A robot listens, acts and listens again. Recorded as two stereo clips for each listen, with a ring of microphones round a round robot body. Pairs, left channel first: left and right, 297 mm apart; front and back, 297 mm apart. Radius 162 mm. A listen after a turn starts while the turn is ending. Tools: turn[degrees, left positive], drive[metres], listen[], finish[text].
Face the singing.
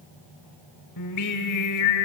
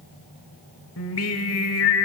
Thought: The singing: 50° left.
Action: turn[50]
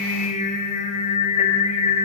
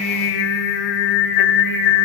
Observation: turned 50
Thought: The singing is now 20° left.
Action: turn[20]
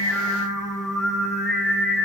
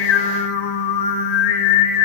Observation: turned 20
Action: finish[Facing the singing.]